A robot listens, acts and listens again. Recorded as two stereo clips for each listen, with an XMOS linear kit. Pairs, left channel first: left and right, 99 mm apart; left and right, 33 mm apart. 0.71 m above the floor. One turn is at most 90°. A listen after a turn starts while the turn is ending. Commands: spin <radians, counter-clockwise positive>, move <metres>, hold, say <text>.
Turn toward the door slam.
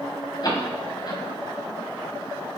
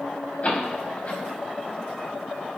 spin 0.79
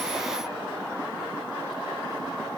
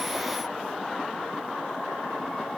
hold
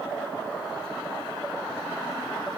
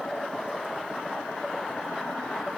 say I heard a door slam, but can't make it out now. It was about straight ahead or 90° left.